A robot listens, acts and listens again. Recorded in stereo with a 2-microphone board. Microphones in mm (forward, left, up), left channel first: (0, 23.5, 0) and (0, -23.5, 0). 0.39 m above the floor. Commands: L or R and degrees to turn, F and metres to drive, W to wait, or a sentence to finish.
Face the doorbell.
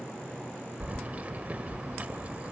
W
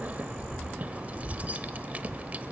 W
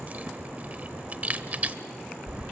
I can't make out a doorbell to turn to.